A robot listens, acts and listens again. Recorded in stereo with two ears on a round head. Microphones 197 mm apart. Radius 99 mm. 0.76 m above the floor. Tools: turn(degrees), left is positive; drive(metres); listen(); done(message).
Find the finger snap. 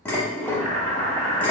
listen()
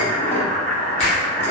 turn(degrees=30)
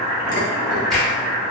done("Facing the finger snap.")